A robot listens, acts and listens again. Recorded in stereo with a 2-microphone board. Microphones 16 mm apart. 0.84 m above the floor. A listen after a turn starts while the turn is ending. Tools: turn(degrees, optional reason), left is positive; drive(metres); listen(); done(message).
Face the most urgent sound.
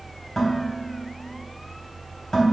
listen()
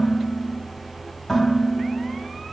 listen()
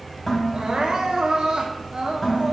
turn(degrees=-55, reason="The crying: about 55° right or 125° right.")
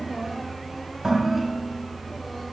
listen()
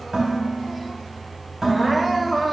done("Found it: crying, straight ahead, 1 to 2 m away.")